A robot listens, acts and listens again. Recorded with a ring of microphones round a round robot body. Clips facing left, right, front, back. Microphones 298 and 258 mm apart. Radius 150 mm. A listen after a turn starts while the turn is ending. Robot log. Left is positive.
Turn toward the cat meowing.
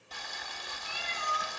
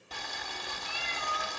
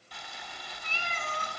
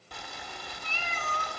note: The cat meowing: 75° left.
cmd yaw +75
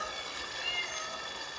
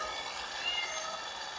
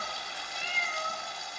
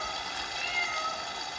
end: Found it: a cat meowing, straight ahead, over 4 m away.